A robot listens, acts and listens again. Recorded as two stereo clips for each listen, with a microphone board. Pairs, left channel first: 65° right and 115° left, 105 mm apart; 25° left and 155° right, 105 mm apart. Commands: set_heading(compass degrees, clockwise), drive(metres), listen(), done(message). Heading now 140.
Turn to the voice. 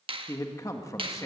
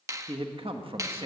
set_heading(265)
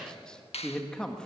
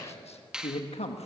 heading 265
set_heading(250)
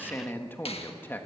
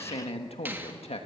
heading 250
done("Facing the man speaking, 1 to 2 m away.")